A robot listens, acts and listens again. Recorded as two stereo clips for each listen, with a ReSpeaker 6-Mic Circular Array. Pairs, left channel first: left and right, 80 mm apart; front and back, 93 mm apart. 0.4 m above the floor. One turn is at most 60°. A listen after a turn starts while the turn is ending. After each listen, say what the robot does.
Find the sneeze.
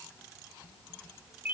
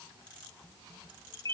Keep listening.
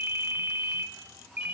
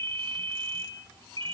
Keep listening.
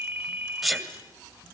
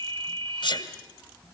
Facing the sneeze.